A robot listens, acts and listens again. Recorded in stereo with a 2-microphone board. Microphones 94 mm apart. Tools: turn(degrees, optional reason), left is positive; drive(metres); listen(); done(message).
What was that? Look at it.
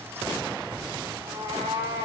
turn(degrees=-90)
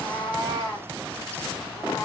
turn(degrees=25, reason="So it is at 25° left.")
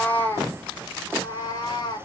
turn(degrees=45, reason="The cat meowing is now 45° left.")
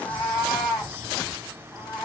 done("Facing the cat meowing.")